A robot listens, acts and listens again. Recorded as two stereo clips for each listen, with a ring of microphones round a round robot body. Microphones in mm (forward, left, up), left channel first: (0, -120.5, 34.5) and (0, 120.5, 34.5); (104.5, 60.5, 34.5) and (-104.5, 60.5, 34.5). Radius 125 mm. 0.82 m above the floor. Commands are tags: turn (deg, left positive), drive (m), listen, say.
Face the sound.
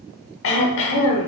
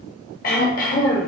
<turn deg="-55"/>
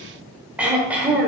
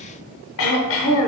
<say>Facing the throat clearing, under 1 m away.</say>